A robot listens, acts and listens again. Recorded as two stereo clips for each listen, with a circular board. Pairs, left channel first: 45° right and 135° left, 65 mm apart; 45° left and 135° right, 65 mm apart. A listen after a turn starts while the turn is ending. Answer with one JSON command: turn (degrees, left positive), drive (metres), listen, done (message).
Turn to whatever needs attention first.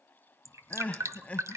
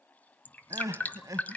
{"turn": -110}
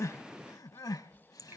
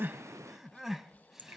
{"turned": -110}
{"turn": -50}
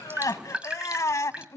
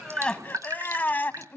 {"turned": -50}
{"turn": -15}
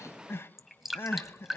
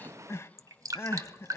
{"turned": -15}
{"done": "Facing the crying, under 1 m away."}